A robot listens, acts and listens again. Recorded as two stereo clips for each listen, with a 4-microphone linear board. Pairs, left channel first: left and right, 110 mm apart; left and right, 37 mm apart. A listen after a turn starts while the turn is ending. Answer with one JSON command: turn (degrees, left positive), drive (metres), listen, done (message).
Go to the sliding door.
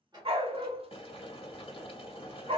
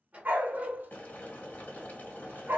{"turn": -40}
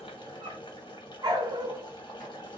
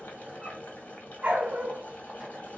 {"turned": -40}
{"listen": true}
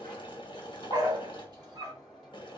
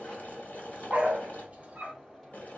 {"drive": 1.0}
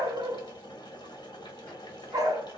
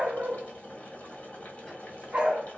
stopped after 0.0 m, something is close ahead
{"listen": true}
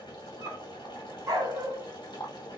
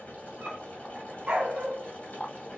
{"listen": true}
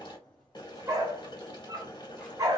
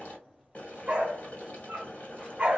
{"done": "Blocked. The sliding door is further on, straight ahead."}